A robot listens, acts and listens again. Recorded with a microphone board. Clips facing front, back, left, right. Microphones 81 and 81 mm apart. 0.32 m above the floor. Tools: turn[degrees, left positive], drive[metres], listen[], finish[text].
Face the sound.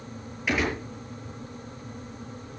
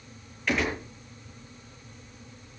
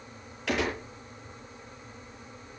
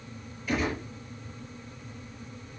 Thought: The gunshot: 85° left.
Action: turn[85]
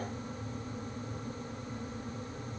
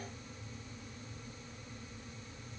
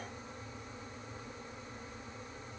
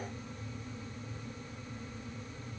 Action: finish[Facing where the gunshot came from. I can't hear it now.]